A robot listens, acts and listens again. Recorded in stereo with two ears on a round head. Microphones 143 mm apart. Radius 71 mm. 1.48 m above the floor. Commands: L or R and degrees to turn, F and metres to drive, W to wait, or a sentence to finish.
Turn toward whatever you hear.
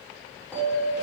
L30
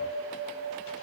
L140
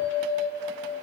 L30
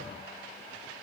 W
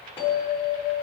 L15
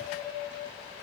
Found it: a bell, straight ahead, over 4 m away.